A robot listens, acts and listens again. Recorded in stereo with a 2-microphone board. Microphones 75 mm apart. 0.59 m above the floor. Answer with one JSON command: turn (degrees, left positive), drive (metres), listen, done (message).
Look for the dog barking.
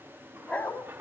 {"turn": 20}
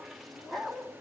{"turn": 30}
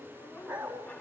{"turn": -20}
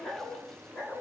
{"turn": 10}
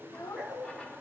{"done": "Facing the dog barking, over 4 m away."}